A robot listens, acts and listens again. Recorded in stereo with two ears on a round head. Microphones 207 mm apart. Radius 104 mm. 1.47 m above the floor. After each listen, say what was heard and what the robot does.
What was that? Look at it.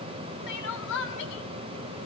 The crying: about 55° left or 125° left. Turn 55° left.
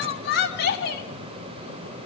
So it is at 55° left. Turn 55° left.
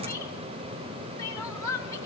The crying is now 15° left. Turn 15° left.
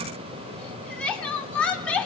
Facing the crying, 2 to 4 m away.